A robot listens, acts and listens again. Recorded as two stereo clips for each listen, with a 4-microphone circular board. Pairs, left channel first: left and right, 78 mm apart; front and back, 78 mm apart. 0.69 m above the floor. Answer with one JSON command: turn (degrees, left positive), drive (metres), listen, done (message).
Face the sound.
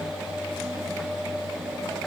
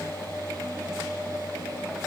{"listen": true}
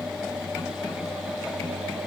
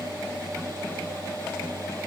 {"listen": true}
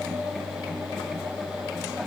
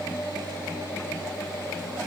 {"done": "I can't make out anything."}